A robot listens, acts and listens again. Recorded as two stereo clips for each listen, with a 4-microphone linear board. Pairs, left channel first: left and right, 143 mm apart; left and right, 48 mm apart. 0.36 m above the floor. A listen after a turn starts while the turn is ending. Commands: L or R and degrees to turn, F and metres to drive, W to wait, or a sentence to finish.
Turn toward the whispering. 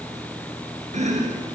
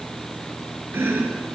W
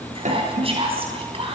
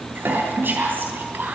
R40
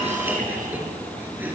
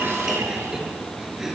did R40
W
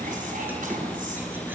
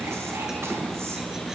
W
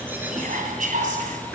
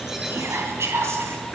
R90
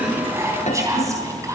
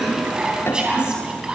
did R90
R25
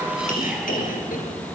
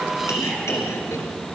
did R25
W
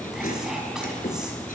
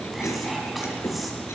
W
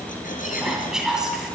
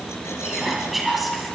Found it: whispering, straight ahead.